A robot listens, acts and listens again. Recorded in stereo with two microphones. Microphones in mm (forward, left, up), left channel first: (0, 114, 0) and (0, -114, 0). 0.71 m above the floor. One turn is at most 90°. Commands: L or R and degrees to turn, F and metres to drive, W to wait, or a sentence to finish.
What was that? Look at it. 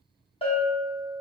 L25
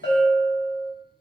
L90
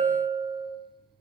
L40
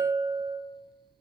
Found it: a bell, straight ahead, under 1 m away.